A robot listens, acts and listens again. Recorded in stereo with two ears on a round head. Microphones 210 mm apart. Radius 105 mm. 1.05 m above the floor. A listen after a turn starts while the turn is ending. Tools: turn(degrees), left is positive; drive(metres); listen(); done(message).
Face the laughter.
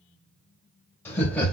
turn(degrees=30)
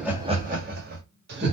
turn(degrees=-50)
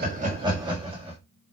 turn(degrees=-25)
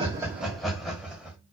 done("Found it: laughter, straight ahead, 2 to 4 m away.")